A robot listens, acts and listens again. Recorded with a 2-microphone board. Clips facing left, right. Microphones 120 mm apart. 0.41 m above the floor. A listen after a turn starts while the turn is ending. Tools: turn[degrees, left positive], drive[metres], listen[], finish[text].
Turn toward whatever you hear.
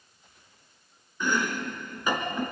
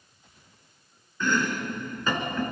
Action: turn[30]
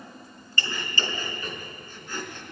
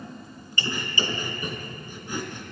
Thought: So it is at 15° right.
Action: turn[-15]
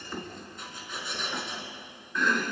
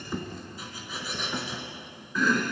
Action: finish[Found it: chopping, straight ahead, 2 to 4 m away.]